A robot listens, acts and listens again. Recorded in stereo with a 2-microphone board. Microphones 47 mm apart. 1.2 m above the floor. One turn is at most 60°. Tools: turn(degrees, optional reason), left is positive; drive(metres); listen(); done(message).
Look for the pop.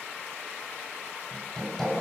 listen()
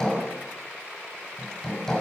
listen()
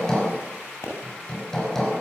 turn(degrees=60)
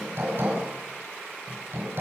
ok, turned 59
turn(degrees=30, reason="Nothing new. It was at 30° left.")
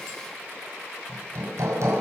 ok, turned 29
done("Facing where the pop came from. I can't hear it now.")